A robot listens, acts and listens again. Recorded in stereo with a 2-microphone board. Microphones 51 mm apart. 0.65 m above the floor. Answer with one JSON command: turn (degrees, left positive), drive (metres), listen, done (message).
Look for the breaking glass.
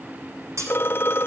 {"turn": -90}
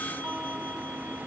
{"done": "I heard breaking glass from this way, but can't make it out now."}